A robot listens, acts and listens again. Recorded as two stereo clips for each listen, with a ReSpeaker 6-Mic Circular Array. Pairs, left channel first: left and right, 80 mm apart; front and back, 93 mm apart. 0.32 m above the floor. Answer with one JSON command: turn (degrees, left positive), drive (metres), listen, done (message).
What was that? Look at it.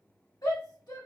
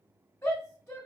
{"turn": 55}
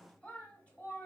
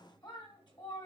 {"turn": 20}
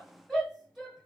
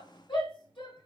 {"done": "Facing the shout."}